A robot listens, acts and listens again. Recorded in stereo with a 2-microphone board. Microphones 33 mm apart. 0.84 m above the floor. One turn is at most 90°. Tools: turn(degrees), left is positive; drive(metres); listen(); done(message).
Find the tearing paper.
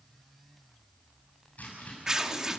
turn(degrees=-15)
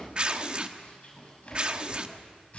turn(degrees=-90)
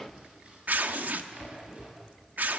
turn(degrees=-65)
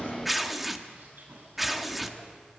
done("Facing the tearing paper, 1 to 2 m away.")